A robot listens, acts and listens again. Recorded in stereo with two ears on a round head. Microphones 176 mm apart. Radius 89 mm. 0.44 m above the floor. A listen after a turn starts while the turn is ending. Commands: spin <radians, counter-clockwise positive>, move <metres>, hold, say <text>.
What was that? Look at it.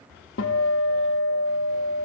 spin 1.22
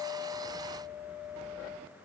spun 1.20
spin 0.70
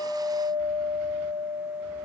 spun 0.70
say Facing the guitar.